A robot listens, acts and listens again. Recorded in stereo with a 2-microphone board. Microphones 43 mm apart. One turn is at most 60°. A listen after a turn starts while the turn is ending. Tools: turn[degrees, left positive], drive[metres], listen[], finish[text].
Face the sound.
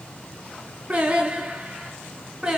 Action: turn[-30]
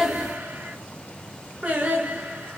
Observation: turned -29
Thought: So it is at 150° right.
Action: turn[-60]
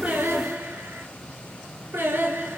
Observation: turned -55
Thought: The singing is now 105° right.
Action: turn[-60]
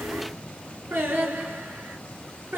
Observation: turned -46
Thought: The singing is now 55° right.
Action: turn[-55]
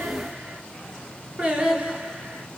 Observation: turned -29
Thought: The singing is now 30° right.
Action: turn[-30]
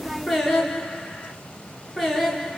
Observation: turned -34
Action: finish[Found it: singing, straight ahead.]